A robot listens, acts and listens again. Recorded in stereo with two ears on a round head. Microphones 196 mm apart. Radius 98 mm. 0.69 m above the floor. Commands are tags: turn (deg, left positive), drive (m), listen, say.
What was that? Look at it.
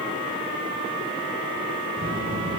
<turn deg="-60"/>
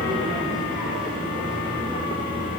<say>Found it: a child speaking, straight ahead.</say>